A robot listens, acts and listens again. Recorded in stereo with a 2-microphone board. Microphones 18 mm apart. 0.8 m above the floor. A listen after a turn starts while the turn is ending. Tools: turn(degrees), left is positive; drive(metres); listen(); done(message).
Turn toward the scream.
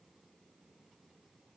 listen()
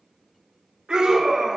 turn(degrees=-70)
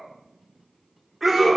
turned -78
done("Found it: a scream, straight ahead, 2 to 4 m away.")